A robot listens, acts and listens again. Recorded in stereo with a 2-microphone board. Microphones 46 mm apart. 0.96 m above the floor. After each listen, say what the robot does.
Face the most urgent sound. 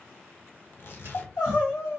Turn 90° left.
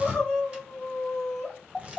Turn 10° left.
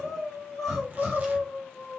Facing the crying.